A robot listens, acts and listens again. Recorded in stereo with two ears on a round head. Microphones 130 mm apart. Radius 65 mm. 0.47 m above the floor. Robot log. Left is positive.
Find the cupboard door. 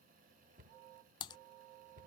note: The cupboard door: about 55° right or 125° right.
cmd yaw -55
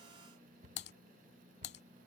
note: So it is at 60° right.
cmd yaw -60
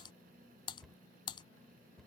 end: Found it: a cupboard door, straight ahead.